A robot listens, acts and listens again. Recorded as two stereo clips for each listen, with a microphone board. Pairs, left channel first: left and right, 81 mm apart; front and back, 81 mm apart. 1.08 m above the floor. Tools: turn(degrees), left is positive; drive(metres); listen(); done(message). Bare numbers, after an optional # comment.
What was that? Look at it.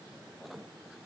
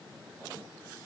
listen()
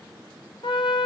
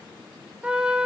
# The trumpet: 100° left.
turn(100)
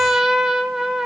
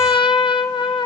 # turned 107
done("Facing the trumpet, 1 to 2 m away.")